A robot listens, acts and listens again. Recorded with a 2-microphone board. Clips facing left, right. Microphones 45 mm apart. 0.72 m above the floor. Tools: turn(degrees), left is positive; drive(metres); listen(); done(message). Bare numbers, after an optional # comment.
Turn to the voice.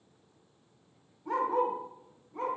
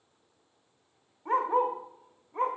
listen()
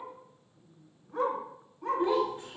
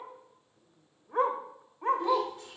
# The child speaking: about 20° left or 160° left.
turn(20)
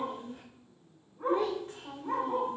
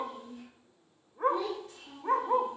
# So it is at 140° left.
turn(140)
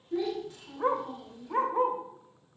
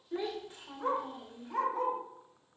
# The child speaking is now 15° right.
turn(-15)
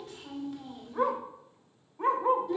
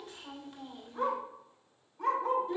done("Found it: a child speaking, straight ahead.")